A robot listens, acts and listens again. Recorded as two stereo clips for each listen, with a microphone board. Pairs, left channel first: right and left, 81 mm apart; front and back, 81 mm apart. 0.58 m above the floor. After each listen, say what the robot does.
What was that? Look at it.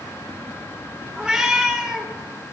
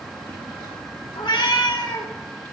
Turn 10° left.
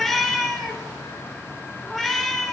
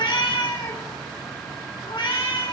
Facing the cat meowing, 2 to 4 m away.